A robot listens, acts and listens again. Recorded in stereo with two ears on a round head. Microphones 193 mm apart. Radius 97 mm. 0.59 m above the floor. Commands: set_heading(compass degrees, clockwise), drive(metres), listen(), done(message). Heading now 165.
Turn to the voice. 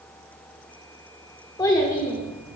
set_heading(150)
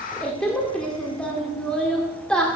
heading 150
done("Facing the child speaking.")